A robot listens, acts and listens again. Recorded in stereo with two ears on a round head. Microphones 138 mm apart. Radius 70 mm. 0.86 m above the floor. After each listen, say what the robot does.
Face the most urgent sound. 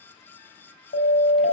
Turn 90° left.
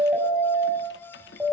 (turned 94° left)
Found it: a siren, straight ahead, over 4 m away.